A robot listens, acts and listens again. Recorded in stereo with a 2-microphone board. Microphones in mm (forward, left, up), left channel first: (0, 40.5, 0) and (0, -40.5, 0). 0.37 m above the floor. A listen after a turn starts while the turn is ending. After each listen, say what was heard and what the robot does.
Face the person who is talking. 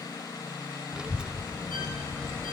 Turn 30° right.
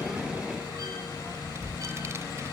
So it is at 135° right. Turn 135° right.
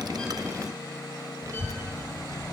The child speaking is now 60° right. Turn 60° right.
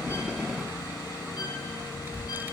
The child speaking is now 30° right. Turn 30° right.
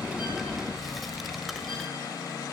Found it: a child speaking, straight ahead.